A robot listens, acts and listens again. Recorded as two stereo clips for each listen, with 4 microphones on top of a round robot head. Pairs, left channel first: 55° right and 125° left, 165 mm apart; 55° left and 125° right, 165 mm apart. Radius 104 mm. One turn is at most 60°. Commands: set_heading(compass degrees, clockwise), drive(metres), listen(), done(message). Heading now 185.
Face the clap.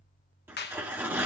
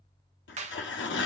set_heading(245)
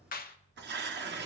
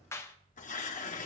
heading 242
set_heading(262)
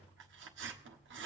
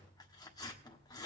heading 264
listen()
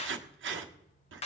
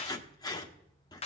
done("Found it: a clap, straight ahead, 1 to 2 m away.")